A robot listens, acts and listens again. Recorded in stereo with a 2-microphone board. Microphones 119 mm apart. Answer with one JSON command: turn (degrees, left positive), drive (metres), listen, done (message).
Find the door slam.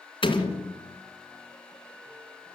{"turn": 45}
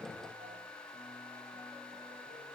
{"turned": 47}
{"listen": true}
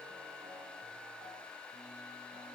{"done": "I heard a door slam, but can't make it out now. It was about straight ahead or 85° left."}